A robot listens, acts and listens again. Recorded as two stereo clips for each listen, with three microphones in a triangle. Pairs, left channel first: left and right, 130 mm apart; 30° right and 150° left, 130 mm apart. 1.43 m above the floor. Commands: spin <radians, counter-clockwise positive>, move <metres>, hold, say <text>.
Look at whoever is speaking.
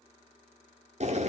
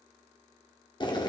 hold
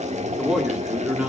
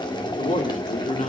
say Facing the man speaking, 2 to 4 m away.